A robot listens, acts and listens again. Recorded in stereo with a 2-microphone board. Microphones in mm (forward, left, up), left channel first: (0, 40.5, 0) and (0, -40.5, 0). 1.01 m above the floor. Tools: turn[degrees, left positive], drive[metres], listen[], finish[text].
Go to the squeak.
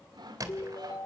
Thought: The squeak: about 50° right or 130° right.
Action: turn[-50]
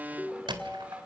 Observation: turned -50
Thought: So it is at 80° right.
Action: turn[-80]
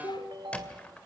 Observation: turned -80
Thought: The squeak is now 15° left.
Action: turn[15]
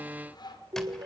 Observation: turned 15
Action: listen[]
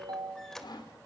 Action: drive[1.0]
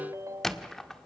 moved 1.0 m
Action: drive[1.0]
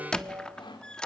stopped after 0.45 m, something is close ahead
Thought: The squeak is now 10° left.
Action: turn[10]
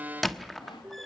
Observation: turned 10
Action: finish[Arrived at the squeak, straight ahead.]